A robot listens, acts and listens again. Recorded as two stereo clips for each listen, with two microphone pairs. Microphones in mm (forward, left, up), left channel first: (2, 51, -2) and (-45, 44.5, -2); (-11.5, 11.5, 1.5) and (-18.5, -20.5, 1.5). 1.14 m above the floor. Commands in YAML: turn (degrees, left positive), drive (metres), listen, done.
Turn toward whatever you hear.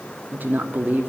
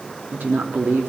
turn: -120
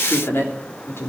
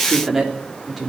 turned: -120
turn: -20
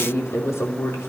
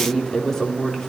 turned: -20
done: "Facing the woman speaking."